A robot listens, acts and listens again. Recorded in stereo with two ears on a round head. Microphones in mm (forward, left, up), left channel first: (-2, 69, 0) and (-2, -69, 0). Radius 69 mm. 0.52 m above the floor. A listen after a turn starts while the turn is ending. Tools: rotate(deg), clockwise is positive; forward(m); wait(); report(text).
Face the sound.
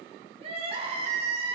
rotate(40)
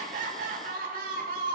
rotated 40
rotate(95)
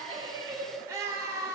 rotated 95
rotate(25)
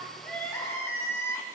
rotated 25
rotate(-20)
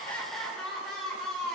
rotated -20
report("Facing the crying.")